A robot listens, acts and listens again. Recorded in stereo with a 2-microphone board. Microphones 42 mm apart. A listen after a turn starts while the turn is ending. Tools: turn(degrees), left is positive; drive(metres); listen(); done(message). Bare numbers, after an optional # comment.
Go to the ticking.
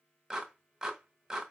listen()
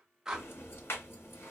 # The ticking: about 75° left or 105° left.
turn(75)
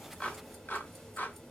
# So it is at 10° left.
turn(10)
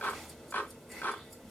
drive(1.0)
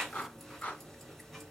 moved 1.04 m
drive(1.0)
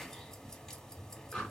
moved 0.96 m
# The ticking is now 15° left.
turn(15)
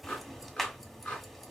drive(1.0)
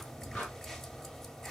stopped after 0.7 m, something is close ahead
# The ticking is now 10° left.
turn(10)
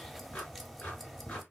done("Arrived at the ticking, straight ahead.")